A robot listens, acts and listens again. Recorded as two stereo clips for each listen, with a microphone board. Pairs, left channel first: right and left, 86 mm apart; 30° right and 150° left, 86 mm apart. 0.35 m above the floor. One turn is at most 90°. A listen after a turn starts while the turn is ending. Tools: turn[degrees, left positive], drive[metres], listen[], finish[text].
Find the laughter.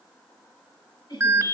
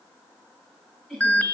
Thought: The laughter: 120° right.
Action: turn[-90]
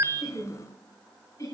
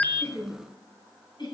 Thought: The laughter is now 45° right.
Action: turn[-45]
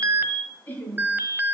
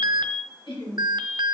Thought: The laughter is now 25° right.
Action: turn[-25]
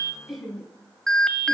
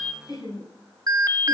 Action: finish[Facing the laughter, 2 to 4 m away.]